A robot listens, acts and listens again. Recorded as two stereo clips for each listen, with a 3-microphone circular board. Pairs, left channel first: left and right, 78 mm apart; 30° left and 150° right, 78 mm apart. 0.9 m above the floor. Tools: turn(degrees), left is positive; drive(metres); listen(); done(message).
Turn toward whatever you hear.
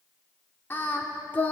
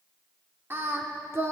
turn(degrees=155)
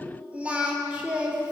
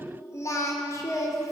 turn(degrees=-15)
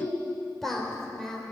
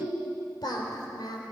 done("Facing the singing, over 4 m away.")